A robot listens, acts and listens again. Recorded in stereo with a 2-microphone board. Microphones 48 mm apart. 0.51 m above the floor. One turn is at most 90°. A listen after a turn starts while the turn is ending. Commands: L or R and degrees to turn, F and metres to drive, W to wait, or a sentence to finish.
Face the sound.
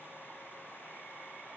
W
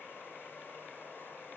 W
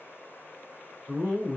R30
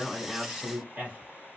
R90
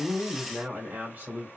R50
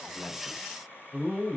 Found it: a man speaking, straight ahead.